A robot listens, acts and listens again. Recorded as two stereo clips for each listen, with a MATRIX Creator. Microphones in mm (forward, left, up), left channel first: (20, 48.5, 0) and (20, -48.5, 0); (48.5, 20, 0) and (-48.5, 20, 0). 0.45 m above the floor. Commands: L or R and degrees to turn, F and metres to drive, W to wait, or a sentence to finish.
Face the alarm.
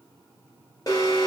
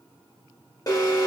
L45
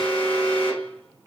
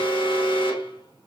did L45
L15
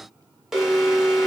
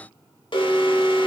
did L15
Facing the alarm, under 1 m away.